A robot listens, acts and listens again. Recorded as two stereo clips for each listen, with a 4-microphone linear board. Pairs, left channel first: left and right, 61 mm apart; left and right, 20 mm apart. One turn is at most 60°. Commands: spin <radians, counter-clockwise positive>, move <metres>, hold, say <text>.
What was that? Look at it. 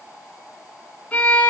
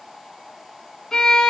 spin 0.44
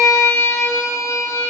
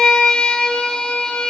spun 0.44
spin 1.05
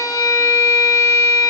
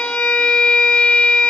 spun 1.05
spin 1.05
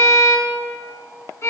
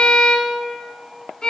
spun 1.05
spin 0.87
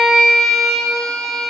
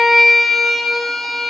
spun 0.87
say Facing the violin.